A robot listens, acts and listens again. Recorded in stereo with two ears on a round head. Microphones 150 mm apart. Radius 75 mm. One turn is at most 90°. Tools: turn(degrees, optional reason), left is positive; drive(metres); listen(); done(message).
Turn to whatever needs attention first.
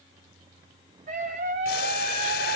turn(degrees=-50, reason="The scream: about 50° right or 130° right.")
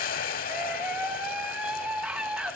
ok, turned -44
done("Found it: a scream, straight ahead, 2 to 4 m away.")